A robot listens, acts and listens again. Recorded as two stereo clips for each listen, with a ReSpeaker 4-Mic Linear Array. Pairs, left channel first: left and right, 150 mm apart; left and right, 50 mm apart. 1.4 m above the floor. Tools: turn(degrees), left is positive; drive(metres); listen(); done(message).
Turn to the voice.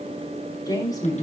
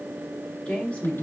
turn(degrees=25)
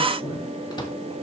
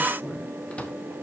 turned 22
listen()
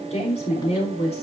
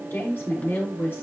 turn(degrees=135)
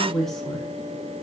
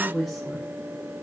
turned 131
done("Found it: a woman speaking, straight ahead, over 4 m away.")